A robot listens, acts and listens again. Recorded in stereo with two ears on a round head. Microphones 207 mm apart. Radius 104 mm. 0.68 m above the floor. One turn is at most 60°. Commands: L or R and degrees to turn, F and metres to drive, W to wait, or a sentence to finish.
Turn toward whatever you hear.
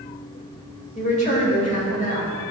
L35
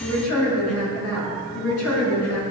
L60
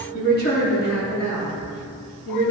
L45
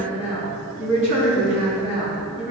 Found it: a woman speaking, straight ahead.